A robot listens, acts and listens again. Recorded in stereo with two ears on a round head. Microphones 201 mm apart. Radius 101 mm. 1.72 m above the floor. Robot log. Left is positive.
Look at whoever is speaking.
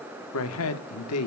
cmd yaw +90
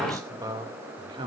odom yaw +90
note: So it is at 25° right.
cmd yaw -25
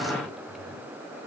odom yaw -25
cmd idle
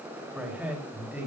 note: The man speaking is now 10° right.
cmd yaw -10
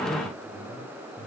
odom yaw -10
end: Found it: a man speaking, straight ahead.